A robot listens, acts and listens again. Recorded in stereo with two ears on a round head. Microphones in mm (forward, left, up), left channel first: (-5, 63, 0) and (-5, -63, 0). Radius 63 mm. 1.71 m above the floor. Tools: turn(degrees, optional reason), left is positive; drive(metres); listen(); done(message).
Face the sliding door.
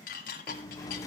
turn(degrees=25, reason="The sliding door: about 25° left or 155° left.")
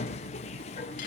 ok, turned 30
turn(degrees=125, reason="So it is at 125° left.")
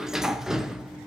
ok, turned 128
done("Facing the sliding door.")